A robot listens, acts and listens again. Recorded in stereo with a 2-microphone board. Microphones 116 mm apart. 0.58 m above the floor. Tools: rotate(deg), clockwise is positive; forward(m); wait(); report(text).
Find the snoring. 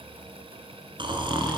rotate(45)
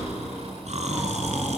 rotate(90)
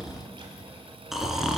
report("Facing the snoring.")